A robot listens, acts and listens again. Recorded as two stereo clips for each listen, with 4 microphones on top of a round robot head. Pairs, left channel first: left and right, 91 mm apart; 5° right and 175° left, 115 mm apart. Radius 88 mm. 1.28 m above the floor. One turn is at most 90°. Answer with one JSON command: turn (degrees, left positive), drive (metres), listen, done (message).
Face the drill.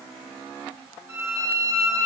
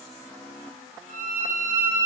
{"listen": true}
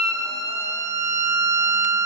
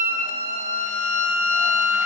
{"listen": true}
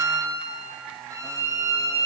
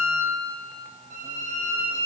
{"done": "I can't make out a drill to turn to."}